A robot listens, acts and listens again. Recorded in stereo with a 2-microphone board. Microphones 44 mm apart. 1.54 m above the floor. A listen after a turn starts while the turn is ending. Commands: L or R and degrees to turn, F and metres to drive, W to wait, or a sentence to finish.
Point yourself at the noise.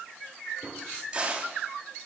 R25
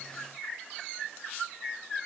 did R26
W
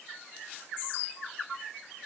I heard a crack, but can't make it out now. It was about straight ahead or 130° right.